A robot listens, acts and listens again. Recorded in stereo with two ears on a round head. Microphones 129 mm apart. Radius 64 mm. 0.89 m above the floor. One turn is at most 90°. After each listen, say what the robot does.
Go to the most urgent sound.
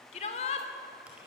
Turn 45° left.
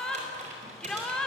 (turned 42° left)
Drive 1.0 m forward.
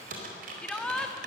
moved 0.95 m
Drive 1.0 m forward.
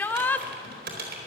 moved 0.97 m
Turn 15° left.
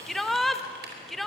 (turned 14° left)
Drive 1.0 m forward.
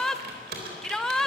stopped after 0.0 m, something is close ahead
I am next to the shout.